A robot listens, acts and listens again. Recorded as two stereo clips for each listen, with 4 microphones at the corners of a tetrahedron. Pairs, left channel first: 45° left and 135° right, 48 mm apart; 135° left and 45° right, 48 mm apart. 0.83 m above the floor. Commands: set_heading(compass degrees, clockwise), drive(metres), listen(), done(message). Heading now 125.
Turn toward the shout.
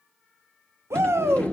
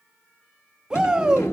set_heading(245)
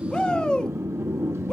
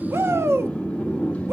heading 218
set_heading(243)
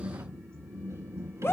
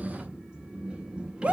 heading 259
set_heading(244)
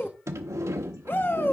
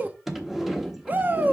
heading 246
done("Found it: a shout, straight ahead, under 1 m away.")